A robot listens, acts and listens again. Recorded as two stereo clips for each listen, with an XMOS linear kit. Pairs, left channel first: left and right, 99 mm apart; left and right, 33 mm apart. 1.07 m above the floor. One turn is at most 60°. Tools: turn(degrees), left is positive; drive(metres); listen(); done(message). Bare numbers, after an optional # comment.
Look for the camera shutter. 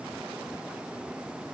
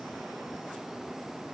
listen()
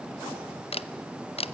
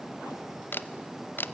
# The camera shutter: about 75° left or 105° left.
turn(60)
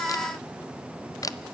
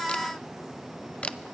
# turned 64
# So it is at 35° left.
turn(35)
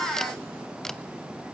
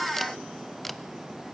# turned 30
listen()
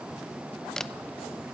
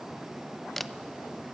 done("Found it: a camera shutter, straight ahead, under 1 m away.")